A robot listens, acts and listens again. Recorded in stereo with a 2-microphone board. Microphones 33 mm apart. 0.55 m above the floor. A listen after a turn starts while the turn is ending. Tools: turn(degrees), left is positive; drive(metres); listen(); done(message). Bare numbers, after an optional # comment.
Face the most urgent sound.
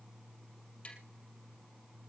listen()
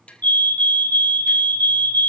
# The fire alarm: about 55° left or 125° left.
turn(55)
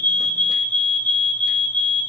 # So it is at 55° left.
turn(55)
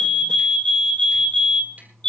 # The fire alarm is now 30° left.
turn(30)
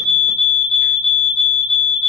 # The fire alarm is now 10° left.
turn(10)
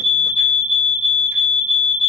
done("Found it: a fire alarm, straight ahead.")